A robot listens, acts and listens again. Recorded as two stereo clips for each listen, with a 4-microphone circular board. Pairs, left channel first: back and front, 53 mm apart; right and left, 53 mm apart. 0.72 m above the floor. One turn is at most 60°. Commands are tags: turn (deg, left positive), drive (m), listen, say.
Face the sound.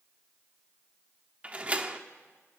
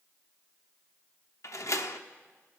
<turn deg="-60"/>
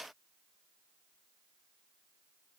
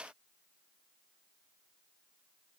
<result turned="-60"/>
<say>I heard a door slam from this way, but can't make it out now.</say>